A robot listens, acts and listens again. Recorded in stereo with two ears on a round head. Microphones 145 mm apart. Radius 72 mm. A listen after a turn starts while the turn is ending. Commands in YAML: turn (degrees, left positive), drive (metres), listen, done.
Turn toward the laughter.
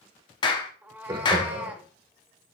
turn: -35
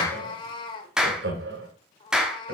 turn: -105
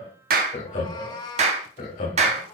turn: 50
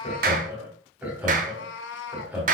turn: -10
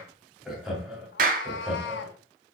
done: "Facing the laughter."